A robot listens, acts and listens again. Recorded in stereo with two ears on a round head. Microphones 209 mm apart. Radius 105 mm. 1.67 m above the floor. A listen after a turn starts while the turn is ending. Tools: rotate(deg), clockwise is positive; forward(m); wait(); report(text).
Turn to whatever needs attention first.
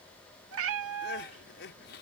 rotate(-55)
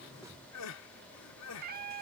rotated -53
rotate(-75)
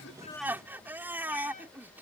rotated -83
rotate(10)
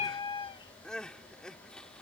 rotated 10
report("Found it: crying, straight ahead.")